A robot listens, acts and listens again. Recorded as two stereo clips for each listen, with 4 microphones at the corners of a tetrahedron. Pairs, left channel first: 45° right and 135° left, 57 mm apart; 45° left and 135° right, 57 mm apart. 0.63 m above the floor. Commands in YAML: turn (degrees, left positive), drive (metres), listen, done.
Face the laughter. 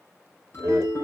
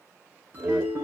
turn: 155
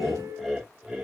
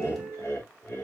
turn: 60
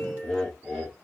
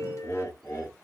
turn: 35
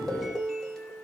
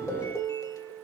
listen: true
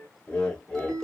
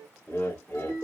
done: "Facing the laughter."